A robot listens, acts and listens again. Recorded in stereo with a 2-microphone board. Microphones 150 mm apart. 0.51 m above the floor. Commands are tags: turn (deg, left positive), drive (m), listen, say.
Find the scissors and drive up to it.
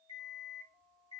<listen/>
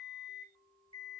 <listen/>
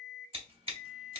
<turn deg="-40"/>
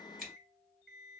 <drive m="1.0"/>
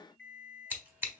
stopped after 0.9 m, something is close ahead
<turn deg="-15"/>
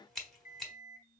<say>I am next to the scissors.</say>